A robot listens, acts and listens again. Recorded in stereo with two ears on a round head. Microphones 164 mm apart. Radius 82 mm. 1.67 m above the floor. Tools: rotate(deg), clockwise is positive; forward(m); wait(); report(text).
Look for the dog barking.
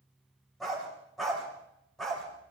rotate(-30)
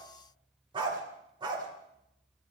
rotate(25)
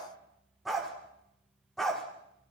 report("Facing the dog barking.")